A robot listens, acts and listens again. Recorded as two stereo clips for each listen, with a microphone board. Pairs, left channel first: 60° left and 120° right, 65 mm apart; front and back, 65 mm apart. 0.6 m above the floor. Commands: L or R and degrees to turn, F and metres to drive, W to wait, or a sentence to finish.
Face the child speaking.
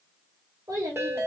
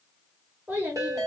R120
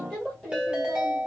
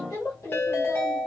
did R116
R25
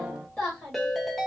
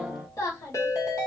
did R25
R15
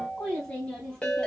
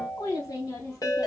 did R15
R10
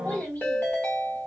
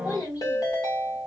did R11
Facing the child speaking.